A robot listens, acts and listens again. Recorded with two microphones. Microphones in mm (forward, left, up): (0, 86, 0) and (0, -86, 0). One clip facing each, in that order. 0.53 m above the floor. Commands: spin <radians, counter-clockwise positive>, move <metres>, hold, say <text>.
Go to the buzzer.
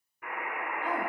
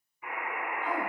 spin 1.05
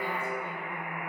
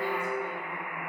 spin 0.35
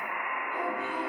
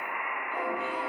move 1.0
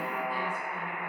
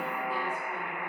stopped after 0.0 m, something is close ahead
say Something is in my way. I am facing the buzzer but have not reached it.